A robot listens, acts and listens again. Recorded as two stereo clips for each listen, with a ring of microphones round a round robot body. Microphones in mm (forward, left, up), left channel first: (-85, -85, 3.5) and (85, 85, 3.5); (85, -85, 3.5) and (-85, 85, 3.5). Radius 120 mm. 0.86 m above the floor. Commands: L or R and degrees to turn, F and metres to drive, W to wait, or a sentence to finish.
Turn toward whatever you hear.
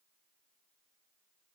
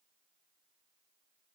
W
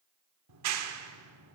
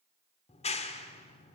L20
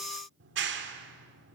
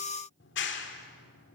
Found it: a clap, straight ahead, 1 to 2 m away.